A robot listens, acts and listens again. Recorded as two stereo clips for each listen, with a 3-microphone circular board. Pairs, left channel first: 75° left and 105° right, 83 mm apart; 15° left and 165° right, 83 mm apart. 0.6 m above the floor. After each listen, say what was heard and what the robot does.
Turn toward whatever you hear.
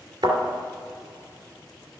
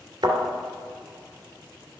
The thud: 125° right. Turn 125° right.
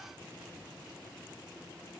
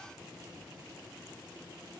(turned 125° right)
I heard a thud from this way, but can't make it out now.